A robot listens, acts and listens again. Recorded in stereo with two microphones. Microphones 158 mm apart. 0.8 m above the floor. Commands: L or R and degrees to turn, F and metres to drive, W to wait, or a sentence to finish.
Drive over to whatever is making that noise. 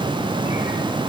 W
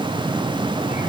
W
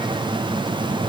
I can't make out anything to turn to.